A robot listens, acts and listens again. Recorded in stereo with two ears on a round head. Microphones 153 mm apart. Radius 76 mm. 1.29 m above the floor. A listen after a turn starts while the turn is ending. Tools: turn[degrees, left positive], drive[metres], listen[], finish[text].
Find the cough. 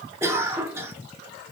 Action: turn[-30]
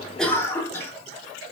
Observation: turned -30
Thought: So it is at 15° left.
Action: turn[15]
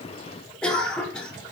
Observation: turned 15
Action: finish[Facing the cough.]